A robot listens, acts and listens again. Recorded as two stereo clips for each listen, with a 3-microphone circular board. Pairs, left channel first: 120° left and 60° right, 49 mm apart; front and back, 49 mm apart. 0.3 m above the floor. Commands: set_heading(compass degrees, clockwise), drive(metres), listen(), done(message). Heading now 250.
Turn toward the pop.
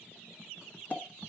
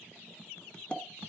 set_heading(185)
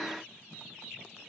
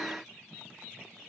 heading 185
done("I heard a pop from this way, but can't make it out now.")